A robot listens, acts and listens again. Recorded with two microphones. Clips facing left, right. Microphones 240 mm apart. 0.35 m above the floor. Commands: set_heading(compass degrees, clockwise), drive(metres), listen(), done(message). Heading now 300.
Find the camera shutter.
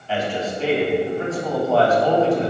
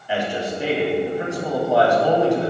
listen()
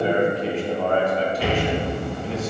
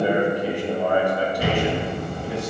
set_heading(345)
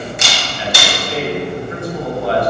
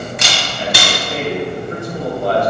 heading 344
set_heading(69)
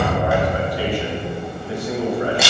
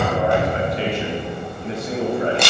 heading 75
done("Facing the camera shutter, 2 to 4 m away.")